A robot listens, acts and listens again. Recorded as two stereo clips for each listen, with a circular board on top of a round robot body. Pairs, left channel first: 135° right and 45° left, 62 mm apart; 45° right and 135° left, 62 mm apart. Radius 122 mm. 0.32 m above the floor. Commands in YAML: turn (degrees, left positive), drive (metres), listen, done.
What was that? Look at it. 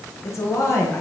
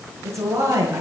turn: 180
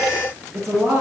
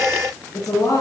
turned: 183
turn: -10
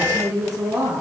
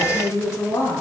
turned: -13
done: "Facing the woman speaking."